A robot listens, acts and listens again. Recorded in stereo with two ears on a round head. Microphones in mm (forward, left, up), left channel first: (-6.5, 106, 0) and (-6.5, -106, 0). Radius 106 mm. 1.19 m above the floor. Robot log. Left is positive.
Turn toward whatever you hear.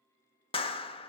note: The clap: about 25° left or 155° left.
cmd yaw +25
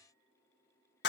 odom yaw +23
note: So it is at 130° left.
cmd yaw +130
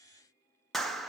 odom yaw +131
end: Facing the clap, 1 to 2 m away.